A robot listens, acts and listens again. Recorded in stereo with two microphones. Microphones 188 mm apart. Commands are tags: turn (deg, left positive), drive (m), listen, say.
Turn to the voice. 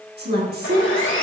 <turn deg="-50"/>
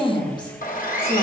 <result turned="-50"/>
<turn deg="35"/>
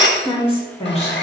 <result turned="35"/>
<turn deg="35"/>
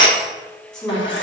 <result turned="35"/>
<say>Facing the woman speaking.</say>